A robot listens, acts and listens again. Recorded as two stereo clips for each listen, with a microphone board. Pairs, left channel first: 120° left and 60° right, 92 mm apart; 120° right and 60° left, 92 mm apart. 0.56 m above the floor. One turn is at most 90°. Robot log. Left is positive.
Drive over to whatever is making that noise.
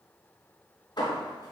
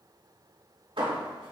note: The hammering: 85° left.
cmd yaw +85
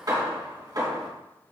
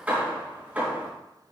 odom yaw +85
note: The hammering is now 10° right.
cmd yaw -10
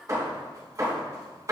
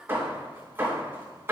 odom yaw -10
cmd fwd 1.0
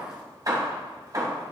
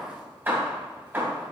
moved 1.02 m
note: The hammering is now 10° right.
cmd yaw -10
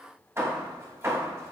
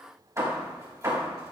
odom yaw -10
cmd fwd 1.0
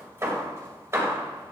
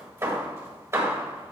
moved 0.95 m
cmd fwd 1.0
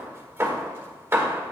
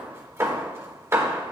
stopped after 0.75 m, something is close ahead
end: I am next to the hammering.